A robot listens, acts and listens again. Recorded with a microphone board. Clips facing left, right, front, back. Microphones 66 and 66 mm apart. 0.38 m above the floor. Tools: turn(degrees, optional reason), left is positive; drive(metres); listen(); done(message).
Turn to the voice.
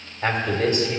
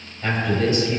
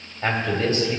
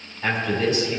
turn(degrees=45, reason="The man speaking: 45° left.")
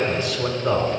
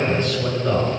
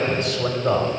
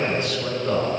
turn(degrees=10, reason="The man speaking is now 10° left.")
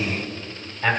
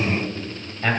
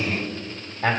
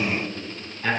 done("Found it: a man speaking, straight ahead.")